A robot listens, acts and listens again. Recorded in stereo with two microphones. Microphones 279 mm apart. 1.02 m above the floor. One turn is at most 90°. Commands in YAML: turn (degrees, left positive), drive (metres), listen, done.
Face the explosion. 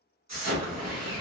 turn: -70
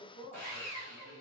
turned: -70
listen: true
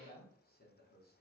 done: "I heard an explosion, but can't make it out now. It was about straight ahead or 40° right."